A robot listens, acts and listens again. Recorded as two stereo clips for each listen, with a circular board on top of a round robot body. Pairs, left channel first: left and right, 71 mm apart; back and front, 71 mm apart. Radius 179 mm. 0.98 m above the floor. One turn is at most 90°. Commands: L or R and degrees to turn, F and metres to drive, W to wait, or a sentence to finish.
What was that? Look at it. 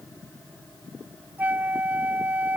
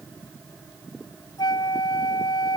R90
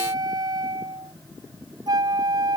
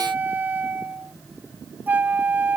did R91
R65
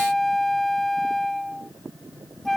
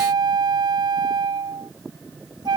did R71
Found it: a flute, straight ahead.